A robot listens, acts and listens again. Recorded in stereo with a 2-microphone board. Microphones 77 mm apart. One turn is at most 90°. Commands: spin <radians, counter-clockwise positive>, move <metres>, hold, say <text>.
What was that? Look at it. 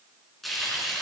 spin 0.52
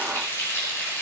spin 1.57
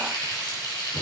spin 1.22
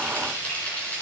spin 0.35
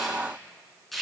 say Facing the frying, over 4 m away.